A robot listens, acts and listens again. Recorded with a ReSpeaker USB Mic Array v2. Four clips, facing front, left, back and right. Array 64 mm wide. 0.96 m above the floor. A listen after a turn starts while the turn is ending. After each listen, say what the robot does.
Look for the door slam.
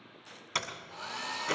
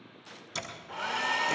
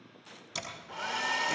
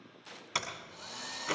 Turn 45° right.
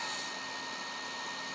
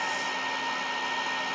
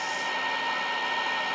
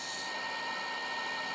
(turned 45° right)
I heard a door slam from this way, but can't make it out now.